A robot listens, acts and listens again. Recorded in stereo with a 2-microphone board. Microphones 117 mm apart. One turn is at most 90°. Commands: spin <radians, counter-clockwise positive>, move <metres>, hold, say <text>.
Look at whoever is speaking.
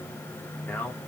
spin 0.26
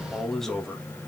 say Facing the man speaking, 2 to 4 m away.